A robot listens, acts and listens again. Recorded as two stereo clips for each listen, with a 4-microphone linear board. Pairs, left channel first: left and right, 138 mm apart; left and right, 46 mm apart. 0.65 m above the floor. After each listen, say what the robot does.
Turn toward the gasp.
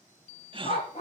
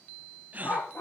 Turn 40° right.
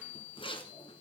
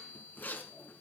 Keep listening.
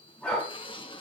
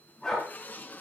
I heard a gasp, but can't make it out now. It was about straight ahead or 100° right.